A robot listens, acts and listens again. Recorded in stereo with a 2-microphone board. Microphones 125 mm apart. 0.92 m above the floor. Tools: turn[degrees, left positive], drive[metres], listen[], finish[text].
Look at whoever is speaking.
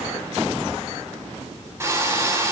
Action: listen[]
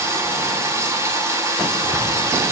Action: listen[]
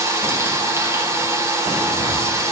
Action: finish[I can't make out anyone speaking, only frying.]